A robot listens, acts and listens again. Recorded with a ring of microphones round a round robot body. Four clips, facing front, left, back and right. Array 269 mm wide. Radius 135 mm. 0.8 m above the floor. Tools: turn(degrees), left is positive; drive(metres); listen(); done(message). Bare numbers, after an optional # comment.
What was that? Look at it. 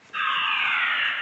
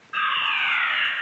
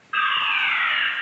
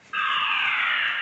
# The fire alarm: 175° right.
turn(-175)
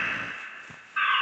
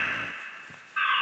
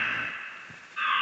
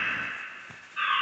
# The fire alarm is now 45° left.
turn(45)
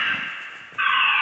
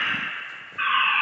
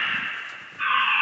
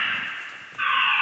# The fire alarm is now 10° left.
turn(10)
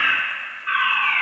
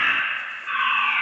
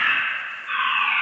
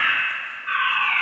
done("Found it: a fire alarm, straight ahead.")